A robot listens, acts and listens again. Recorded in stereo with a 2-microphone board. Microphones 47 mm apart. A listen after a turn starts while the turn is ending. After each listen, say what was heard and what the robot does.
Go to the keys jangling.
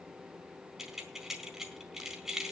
Turn 30° right.
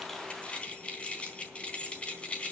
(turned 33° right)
So it is at 25° left. Turn 25° left.
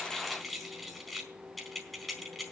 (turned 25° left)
Drive 1.0 m forward.
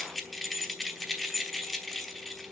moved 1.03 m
Drive 1.0 m forward.
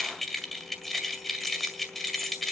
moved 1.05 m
Drive 1.0 m forward.
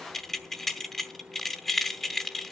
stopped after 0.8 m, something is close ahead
I am next to the keys jangling.